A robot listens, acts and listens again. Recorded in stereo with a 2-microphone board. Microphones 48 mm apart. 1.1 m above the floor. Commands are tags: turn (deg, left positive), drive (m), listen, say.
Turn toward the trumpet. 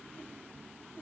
<listen/>
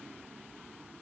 <listen/>
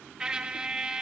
<turn deg="-20"/>
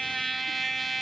<say>Facing the trumpet.</say>